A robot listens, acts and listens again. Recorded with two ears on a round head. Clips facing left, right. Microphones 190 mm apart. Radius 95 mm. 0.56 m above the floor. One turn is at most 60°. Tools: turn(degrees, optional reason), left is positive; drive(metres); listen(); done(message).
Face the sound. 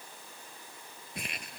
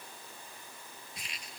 turn(degrees=50, reason="The crumpling: about 50° left or 130° left.")
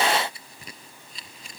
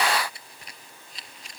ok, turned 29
turn(degrees=60, reason="So it is at 100° left.")
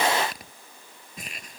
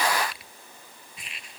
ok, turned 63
turn(degrees=40, reason="The crumpling is now 40° left.")
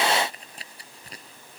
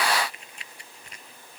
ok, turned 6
turn(degrees=30, reason="The crumpling is now 30° left.")
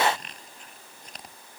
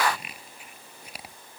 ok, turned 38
turn(degrees=-10, reason="The crumpling is now 10° right.")
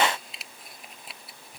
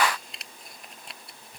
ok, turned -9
done("Facing the crumpling.")